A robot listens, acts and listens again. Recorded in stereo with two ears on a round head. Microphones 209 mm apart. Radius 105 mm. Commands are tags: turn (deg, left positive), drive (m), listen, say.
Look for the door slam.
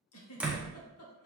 <turn deg="-30"/>
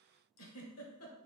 <listen/>
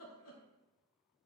<say>I heard a door slam, but can't make it out now. It was about 25° left or 145° right.</say>